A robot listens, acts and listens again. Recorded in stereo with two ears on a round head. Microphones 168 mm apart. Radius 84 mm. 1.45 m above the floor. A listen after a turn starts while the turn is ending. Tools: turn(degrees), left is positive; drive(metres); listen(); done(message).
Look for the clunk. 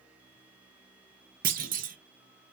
turn(degrees=-45)
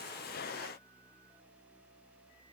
listen()
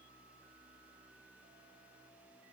done("I heard a clunk, but can't make it out now. It was about straight ahead or 90° right.")